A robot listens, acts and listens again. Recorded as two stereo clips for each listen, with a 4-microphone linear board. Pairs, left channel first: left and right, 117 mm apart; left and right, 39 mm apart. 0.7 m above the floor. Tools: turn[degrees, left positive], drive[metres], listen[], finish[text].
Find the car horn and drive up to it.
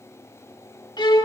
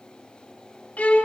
Action: listen[]
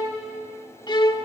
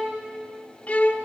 Action: listen[]
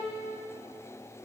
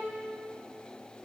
Action: finish[I can't make out a car horn, only a violin.]